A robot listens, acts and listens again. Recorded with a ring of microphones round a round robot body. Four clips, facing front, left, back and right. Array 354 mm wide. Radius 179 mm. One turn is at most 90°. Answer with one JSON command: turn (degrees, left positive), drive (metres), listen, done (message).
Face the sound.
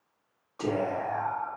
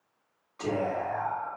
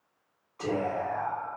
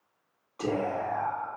{"turn": -20}
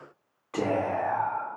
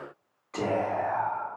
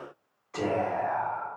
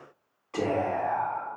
{"turn": -10}
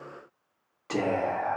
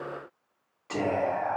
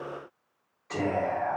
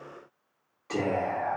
{"done": "Found it: whispering, straight ahead."}